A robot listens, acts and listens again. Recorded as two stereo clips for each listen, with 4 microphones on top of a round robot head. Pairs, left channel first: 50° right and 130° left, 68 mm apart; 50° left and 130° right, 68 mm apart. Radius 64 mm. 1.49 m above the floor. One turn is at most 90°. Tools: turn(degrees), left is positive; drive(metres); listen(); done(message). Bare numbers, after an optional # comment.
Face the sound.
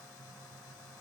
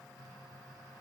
listen()
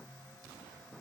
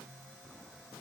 listen()
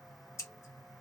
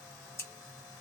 done("Facing the scissors.")